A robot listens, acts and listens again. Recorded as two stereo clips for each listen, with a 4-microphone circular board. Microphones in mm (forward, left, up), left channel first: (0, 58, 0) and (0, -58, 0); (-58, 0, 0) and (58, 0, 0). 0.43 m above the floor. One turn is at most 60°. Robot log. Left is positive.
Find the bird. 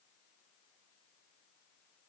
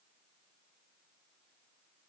cmd idle
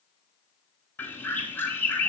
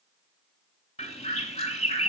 note: The bird: 160° left.
cmd yaw +60
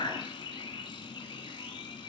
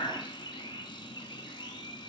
note: The bird is now 135° left.
cmd yaw +60
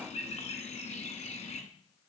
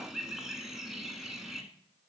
note: The bird is now 85° left.
cmd yaw +60
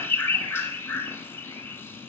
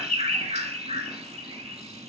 note: The bird is now 20° left.
cmd yaw +20
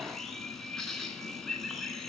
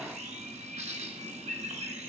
end: Facing the bird, 1 to 2 m away.